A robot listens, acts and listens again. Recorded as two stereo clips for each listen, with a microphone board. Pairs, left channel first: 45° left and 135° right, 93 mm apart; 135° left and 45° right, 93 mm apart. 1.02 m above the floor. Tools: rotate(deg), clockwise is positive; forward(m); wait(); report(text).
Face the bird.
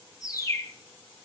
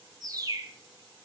report("Facing the bird.")